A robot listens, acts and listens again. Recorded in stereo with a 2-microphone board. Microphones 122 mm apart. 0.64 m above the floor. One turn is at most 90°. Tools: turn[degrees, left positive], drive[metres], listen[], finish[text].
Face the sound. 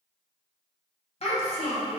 Thought: The child speaking: about 55° left or 125° left.
Action: turn[55]
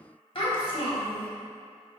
Thought: So it is at 55° left.
Action: turn[55]
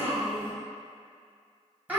Thought: The child speaking is now 15° right.
Action: turn[-15]
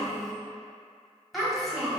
Action: finish[Found it: a child speaking, straight ahead, 1 to 2 m away.]